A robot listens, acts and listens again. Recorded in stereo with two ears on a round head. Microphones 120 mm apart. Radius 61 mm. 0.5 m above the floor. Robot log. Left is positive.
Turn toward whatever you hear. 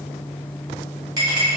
note: The clink: about 35° right or 145° right.
cmd yaw -35
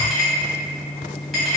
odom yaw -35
end: Facing the clink.